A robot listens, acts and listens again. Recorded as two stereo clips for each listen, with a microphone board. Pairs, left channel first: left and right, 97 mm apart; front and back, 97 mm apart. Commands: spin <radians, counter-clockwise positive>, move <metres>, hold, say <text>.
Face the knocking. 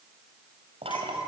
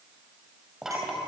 spin -1.66
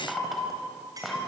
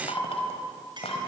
say Facing the knocking, 2 to 4 m away.